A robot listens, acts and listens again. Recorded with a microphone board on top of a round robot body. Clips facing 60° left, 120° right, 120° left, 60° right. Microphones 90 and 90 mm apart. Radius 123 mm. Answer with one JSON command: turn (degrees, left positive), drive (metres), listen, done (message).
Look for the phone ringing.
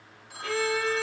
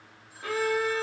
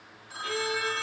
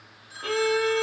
{"turn": 70}
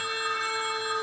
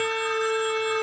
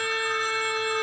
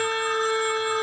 {"listen": true}
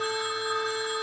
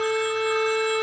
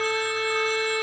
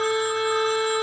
{"listen": true}
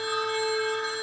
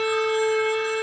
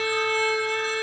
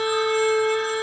{"done": "I heard a phone ringing from this way, but can't make it out now."}